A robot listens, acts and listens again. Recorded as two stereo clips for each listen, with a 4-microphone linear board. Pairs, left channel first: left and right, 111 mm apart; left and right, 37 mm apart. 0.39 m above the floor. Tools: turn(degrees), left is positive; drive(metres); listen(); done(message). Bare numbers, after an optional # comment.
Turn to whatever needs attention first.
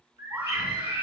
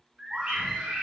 # The scream: about 15° right or 165° right.
turn(-15)
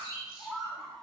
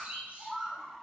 done("Facing the scream.")